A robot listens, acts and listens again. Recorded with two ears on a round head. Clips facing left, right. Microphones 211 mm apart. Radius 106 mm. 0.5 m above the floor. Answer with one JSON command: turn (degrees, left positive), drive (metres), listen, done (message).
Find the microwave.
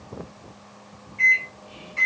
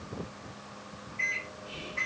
{"turn": 30}
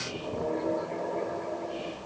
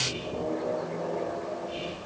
{"done": "Facing the microwave."}